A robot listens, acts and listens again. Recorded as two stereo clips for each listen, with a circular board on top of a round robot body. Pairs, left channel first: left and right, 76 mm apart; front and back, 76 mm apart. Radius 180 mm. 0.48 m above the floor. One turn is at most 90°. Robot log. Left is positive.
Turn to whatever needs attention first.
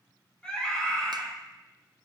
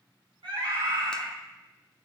note: The scream: 170° left.
cmd yaw +90
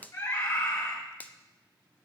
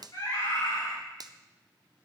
note: The scream is now 45° left.
cmd yaw +45
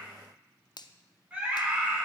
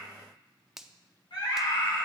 note: The scream is now 15° right.
cmd yaw -15
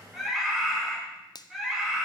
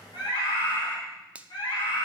end: Facing the scream, over 4 m away.